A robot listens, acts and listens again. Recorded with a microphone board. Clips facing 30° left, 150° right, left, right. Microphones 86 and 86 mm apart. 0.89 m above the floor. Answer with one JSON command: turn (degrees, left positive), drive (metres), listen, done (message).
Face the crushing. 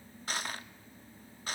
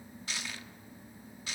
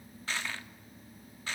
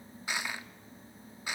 {"turn": -15}
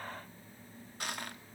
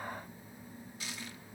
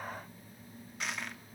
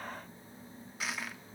{"done": "Found it: crushing, straight ahead."}